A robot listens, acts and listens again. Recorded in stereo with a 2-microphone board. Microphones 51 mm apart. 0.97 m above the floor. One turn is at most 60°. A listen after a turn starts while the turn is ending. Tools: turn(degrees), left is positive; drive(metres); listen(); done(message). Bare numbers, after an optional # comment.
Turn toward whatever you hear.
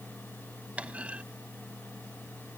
# The clunk: about 25° right or 155° right.
turn(-25)
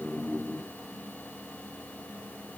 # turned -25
listen()
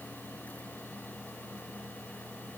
done("I heard a clunk, but can't make it out now. It was about straight ahead or 130° right.")